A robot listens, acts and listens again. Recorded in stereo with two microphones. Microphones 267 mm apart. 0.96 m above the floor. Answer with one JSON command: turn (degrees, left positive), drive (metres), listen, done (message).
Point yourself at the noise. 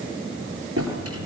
{"turn": -65}
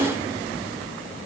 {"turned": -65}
{"done": "Found it: a drawer, straight ahead."}